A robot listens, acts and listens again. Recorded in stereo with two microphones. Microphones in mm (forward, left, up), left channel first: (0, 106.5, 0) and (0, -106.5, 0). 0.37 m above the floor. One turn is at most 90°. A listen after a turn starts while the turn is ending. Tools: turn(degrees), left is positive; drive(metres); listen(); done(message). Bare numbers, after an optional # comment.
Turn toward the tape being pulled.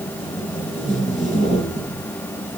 # The tape being pulled: about 40° right or 140° right.
turn(-40)
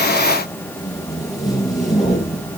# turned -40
done("Facing the tape being pulled.")